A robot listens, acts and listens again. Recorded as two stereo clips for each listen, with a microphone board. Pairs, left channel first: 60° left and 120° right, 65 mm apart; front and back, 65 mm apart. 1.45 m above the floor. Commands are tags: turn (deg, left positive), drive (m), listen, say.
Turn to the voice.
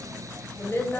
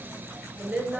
<turn deg="110"/>
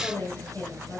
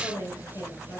<say>Facing the woman speaking, over 4 m away.</say>